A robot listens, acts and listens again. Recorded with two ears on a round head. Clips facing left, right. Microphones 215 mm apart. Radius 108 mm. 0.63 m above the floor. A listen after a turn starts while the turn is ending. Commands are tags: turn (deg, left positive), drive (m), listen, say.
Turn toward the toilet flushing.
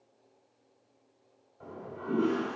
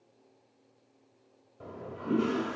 <turn deg="-55"/>
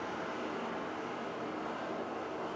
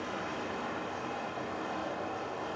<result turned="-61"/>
<turn deg="-65"/>
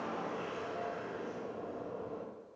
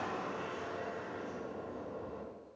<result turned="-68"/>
<say>Found it: a toilet flushing, straight ahead, 1 to 2 m away.</say>